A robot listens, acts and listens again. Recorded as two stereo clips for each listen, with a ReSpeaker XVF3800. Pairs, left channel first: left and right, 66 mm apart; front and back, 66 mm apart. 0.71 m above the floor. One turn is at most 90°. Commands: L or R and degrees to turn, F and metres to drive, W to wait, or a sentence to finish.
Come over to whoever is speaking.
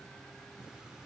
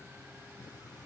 W
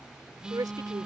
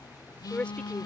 R70
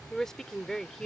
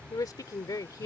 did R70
L10
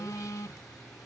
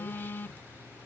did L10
W
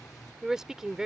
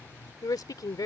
F1.0
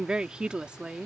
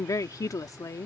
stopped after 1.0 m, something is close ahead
R15
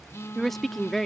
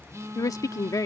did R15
I am next to the woman speaking.